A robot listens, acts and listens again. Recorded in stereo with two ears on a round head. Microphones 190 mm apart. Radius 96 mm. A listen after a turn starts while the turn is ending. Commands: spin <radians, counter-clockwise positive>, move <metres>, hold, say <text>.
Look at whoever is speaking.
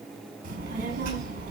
spin -0.70
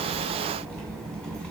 say Found it: a child speaking, straight ahead, 2 to 4 m away.